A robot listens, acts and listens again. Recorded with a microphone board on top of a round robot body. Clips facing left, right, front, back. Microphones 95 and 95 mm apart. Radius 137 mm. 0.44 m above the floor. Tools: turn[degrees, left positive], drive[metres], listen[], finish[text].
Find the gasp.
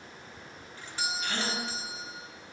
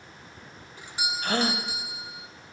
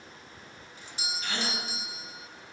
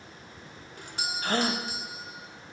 Thought: The gasp: 135° right.
Action: turn[-135]
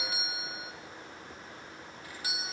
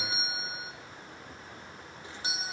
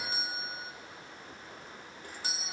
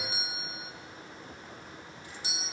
Action: finish[I heard a gasp from this way, but can't make it out now.]